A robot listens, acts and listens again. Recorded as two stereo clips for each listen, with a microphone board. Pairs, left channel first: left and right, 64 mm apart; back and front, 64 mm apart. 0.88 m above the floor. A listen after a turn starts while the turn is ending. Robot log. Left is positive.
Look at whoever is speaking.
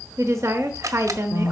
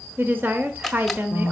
note: The woman speaking: 55° right.
cmd yaw -55
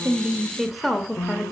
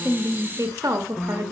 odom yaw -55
end: Facing the woman speaking.